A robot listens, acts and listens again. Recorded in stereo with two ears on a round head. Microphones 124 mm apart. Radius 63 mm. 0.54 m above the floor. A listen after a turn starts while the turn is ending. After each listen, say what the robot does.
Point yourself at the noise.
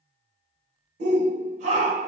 Turn 55° right.
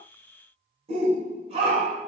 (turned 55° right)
Turn 50° right.
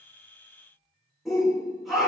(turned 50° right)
Facing the shout, 1 to 2 m away.